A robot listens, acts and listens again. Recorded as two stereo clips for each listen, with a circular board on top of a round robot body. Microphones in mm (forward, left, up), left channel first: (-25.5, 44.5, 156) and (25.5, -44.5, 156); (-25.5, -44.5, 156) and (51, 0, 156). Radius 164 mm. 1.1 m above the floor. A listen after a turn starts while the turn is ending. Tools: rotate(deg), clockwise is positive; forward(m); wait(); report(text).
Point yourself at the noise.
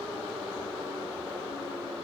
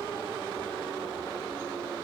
wait()
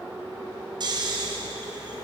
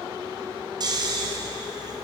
rotate(10)
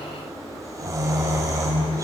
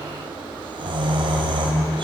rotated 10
report("Facing the snoring, 2 to 4 m away.")